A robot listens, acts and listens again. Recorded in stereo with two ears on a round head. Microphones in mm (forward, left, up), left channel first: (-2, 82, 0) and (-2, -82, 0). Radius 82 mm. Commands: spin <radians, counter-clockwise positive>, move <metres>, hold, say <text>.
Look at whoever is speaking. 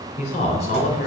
spin 0.70
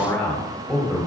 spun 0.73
say Facing the man speaking, 1 to 2 m away.